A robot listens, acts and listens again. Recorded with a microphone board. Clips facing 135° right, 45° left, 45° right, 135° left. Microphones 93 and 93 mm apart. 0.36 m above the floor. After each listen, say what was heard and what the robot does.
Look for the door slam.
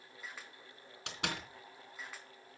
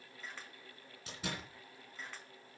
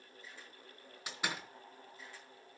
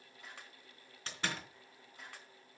The door slam: 125° right. Turn 125° right.
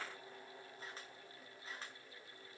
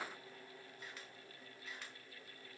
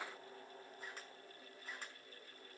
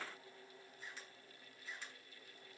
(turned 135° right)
Nothing new. It was at 10° left. Turn 10° left.
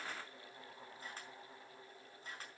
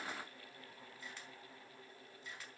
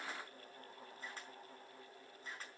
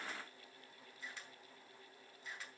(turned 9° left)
I heard a door slam from this way, but can't make it out now.